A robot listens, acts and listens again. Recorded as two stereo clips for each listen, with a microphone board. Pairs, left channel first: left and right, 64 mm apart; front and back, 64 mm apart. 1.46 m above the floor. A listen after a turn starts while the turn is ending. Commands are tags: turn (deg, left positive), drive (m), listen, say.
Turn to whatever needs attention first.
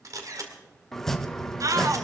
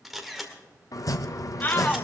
<turn deg="-60"/>
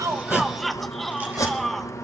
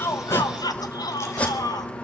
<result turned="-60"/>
<say>Found it: a shout, straight ahead.</say>